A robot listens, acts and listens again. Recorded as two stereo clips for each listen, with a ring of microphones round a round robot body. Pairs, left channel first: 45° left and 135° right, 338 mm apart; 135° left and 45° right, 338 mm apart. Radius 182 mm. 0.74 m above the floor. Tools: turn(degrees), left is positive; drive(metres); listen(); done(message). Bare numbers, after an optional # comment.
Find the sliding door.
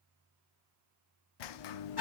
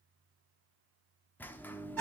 # The sliding door: 50° left.
turn(50)
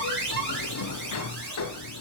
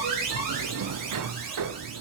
done("Found it: a sliding door, straight ahead.")